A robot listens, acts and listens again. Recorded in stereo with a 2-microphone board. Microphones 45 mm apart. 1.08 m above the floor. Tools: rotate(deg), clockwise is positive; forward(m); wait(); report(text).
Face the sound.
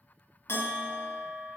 rotate(-65)
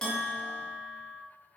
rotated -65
rotate(-15)
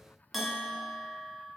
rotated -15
report("Facing the bell, 1 to 2 m away.")